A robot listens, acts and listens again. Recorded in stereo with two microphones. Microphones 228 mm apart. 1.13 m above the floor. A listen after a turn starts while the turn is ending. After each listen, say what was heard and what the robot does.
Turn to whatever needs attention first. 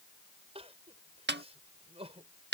The crying: about 25° right or 155° right. Turn 25° right.
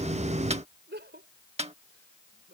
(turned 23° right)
So it is at 130° right. Turn 130° right.
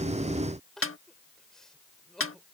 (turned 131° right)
Found it: crying, straight ahead.